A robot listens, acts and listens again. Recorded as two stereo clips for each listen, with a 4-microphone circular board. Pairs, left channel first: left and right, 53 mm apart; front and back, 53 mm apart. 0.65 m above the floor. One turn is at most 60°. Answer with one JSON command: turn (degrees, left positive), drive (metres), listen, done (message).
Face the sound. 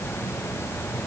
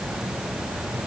{"listen": true}
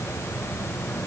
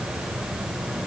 {"listen": true}
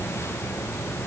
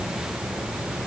{"done": "I can't make out anything to turn to."}